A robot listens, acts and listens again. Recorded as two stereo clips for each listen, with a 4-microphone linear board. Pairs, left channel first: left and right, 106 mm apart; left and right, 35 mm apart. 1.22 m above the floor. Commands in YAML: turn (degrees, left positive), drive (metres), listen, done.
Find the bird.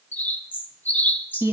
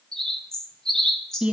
turn: 15
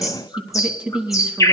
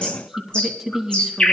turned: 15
turn: 150
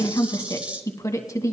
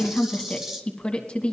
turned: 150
listen: true
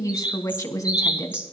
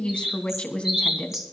turn: -15
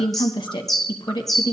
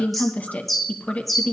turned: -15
done: "Facing the bird."